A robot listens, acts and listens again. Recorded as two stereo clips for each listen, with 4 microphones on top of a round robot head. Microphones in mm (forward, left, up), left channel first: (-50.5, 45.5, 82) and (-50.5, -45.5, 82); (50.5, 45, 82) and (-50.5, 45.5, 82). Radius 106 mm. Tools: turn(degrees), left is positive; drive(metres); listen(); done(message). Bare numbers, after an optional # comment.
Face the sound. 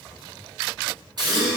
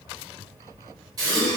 # The gasp: 125° right.
turn(-125)
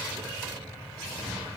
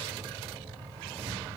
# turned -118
# Nothing new. It was at 10° right.
turn(-10)
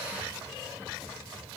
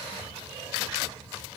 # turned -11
done("Facing where the gasp came from. I can't hear it now.")